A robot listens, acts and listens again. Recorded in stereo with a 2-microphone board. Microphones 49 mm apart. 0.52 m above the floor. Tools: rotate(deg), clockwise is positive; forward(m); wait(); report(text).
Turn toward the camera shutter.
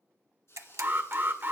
rotate(90)
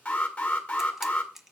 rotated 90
rotate(10)
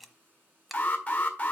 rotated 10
wait()
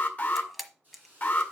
report("Found it: a camera shutter, straight ahead.")